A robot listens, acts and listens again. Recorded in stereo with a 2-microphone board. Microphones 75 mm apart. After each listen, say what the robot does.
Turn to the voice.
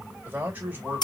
Turn 20° right.
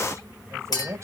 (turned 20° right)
Turn 140° right.
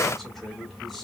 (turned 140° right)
Keep listening.
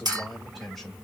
Found it: a man speaking, straight ahead, 2 to 4 m away.